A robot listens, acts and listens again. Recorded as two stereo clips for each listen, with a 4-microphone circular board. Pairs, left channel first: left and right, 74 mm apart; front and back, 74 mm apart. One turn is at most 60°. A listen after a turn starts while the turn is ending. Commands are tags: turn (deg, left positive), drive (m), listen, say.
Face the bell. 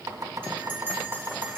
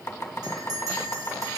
<turn deg="-60"/>
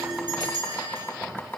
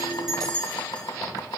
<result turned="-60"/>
<turn deg="-60"/>
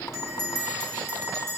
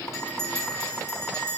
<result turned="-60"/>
<turn deg="-30"/>
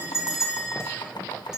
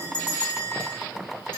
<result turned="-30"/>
<turn deg="-10"/>
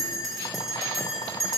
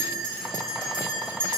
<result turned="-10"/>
<say>Facing the bell.</say>